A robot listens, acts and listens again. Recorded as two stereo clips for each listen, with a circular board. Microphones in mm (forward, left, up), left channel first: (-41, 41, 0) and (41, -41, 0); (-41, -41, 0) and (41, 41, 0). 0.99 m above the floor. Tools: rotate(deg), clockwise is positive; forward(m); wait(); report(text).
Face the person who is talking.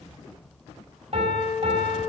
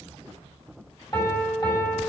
wait()
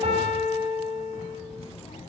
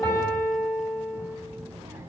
rotate(-115)
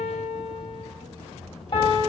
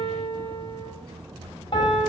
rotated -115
rotate(10)
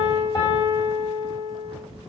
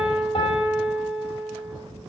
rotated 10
wait()
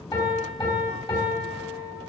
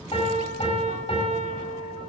wait()
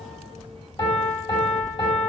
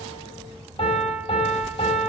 rotate(10)
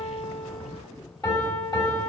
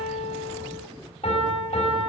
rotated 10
wait()
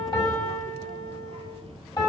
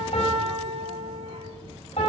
wait()
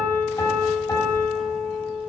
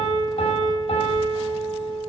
report("I heard a child speaking from this way, but can't make it out now.")